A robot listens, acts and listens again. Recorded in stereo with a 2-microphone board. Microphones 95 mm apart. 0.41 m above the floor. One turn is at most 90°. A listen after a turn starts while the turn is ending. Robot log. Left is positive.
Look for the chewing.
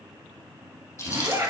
note: The chewing: about 30° left or 150° left.
cmd yaw +30
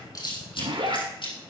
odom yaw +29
note: So it is at 120° left.
cmd yaw +90
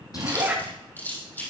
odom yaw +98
note: The chewing is now 20° left.
cmd yaw +20
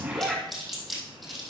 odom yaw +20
end: Facing the chewing.